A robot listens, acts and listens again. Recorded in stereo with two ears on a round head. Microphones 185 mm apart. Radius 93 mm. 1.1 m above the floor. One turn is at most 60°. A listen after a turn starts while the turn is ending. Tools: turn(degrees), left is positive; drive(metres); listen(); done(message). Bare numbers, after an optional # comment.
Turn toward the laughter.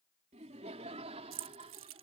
# The laughter: about 30° right or 150° right.
turn(-30)
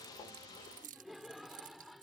done("Facing the laughter.")